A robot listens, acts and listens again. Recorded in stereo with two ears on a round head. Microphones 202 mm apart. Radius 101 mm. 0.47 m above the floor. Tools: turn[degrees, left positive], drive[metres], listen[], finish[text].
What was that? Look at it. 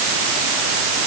Action: listen[]
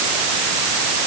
Action: listen[]
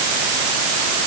Action: finish[I can't make out anything to turn to.]